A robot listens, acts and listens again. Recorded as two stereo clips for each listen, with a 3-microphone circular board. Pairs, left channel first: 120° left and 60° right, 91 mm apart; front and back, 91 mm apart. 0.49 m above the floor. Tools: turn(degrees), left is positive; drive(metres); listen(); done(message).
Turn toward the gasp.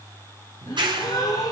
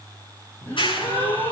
turn(degrees=70)
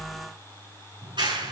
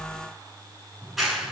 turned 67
done("Facing where the gasp came from. I can't hear it now.")